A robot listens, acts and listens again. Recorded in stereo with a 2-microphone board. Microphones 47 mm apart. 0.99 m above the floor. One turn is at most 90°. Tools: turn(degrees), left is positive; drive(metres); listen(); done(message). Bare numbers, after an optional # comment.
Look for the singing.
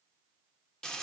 listen()
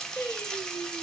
# The singing: about 60° left or 120° left.
turn(60)
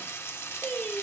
# So it is at 20° left.
turn(20)
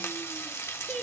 # The singing is now 15° left.
turn(15)
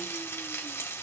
listen()
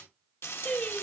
# The singing is now 25° left.
turn(25)
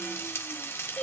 # The singing is now 20° left.
turn(20)
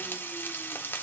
listen()
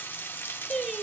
done("Found it: singing, straight ahead, 2 to 4 m away.")